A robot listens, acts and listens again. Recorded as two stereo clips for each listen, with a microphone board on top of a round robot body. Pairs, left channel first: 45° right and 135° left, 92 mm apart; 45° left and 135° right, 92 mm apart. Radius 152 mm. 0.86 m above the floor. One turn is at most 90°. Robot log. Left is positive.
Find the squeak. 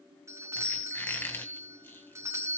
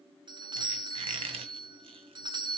note: The squeak: 115° right.
cmd yaw -90
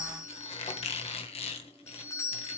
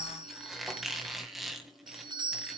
note: The squeak is now 45° right.
cmd yaw -45
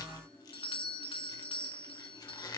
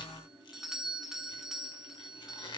end: Facing the squeak.